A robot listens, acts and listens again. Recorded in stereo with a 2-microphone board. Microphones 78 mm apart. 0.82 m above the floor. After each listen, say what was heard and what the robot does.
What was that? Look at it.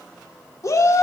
The shout: about 45° left or 135° left. Turn 45° left.
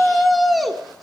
Found it: a shout, straight ahead, 1 to 2 m away.